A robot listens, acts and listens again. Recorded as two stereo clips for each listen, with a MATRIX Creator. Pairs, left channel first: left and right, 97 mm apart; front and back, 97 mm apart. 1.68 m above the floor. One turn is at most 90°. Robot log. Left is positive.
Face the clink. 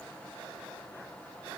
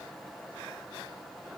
cmd idle
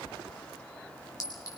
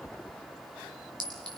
note: The clink: 140° left.
cmd yaw +90
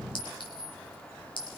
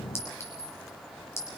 note: The clink is now 60° left.
cmd yaw +60
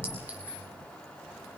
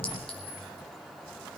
note: The clink is now 15° right.
cmd yaw -15
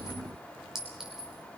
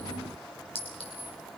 end: Found it: a clink, straight ahead, over 4 m away.